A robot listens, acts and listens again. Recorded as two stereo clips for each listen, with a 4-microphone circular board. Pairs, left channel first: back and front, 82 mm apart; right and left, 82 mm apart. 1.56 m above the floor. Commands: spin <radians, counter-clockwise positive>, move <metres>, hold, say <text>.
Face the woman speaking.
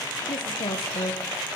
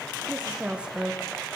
spin 2.88
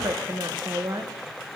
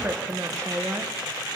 spin 0.52
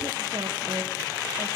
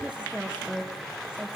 spin 0.26
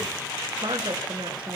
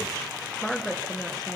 say Facing the woman speaking.